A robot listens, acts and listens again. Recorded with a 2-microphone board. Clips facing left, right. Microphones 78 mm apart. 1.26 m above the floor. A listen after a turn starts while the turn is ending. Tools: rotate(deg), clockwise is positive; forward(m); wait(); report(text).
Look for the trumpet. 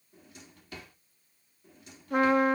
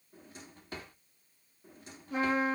rotate(-65)
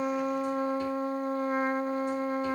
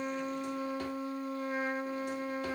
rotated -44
rotate(-50)
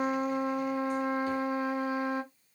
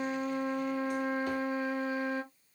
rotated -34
rotate(-20)
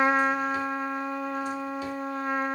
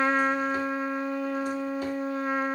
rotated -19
report("Facing the trumpet.")